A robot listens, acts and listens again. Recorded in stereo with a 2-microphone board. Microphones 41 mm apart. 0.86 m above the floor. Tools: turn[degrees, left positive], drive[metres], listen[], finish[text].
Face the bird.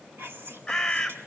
Action: turn[30]
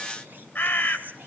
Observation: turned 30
Thought: So it is at 145° left.
Action: turn[145]
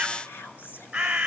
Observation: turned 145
Thought: The bird is now 15° right.
Action: turn[-15]
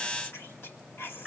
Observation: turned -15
Thought: The bird is now 10° right.
Action: turn[-10]
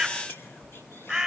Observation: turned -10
Action: finish[Facing the bird, 1 to 2 m away.]